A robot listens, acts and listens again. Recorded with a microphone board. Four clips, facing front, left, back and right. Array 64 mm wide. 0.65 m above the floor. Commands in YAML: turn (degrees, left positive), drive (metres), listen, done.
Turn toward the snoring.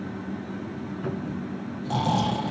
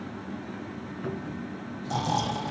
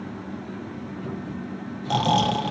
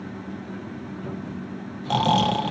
turn: -115
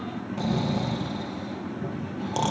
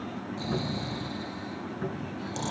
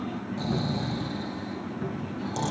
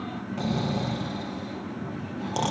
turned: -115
turn: -50
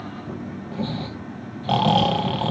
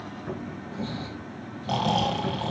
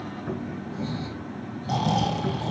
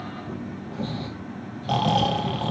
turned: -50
turn: -10
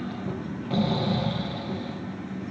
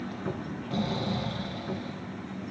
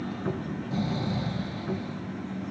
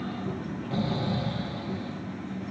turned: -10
done: "Facing the snoring."